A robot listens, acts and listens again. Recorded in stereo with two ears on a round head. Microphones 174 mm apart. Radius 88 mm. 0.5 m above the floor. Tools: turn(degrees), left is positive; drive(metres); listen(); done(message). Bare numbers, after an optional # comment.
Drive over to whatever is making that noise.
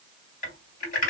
# The typing on a keyboard: about 45° left or 135° left.
turn(45)
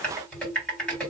drive(1.0)
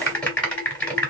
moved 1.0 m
# The typing on a keyboard is now 10° left.
turn(10)
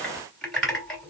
drive(1.0)
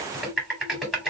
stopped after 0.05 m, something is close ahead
done("I am next to the typing on a keyboard.")